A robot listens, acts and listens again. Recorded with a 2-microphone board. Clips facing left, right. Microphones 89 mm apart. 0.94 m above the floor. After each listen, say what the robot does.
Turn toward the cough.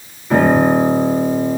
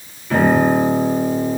Keep listening.
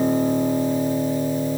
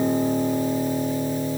Keep listening.
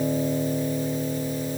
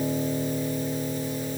I can't make out a cough, only a piano.